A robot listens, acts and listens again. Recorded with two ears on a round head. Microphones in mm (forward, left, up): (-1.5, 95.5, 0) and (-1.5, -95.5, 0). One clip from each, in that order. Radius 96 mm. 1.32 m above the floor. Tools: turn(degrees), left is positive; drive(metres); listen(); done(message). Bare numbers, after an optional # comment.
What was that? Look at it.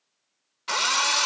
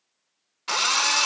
turn(-30)
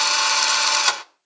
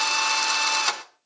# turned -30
# So it is at 25° left.
turn(25)
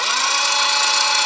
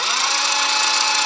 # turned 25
done("Found it: a drill, straight ahead.")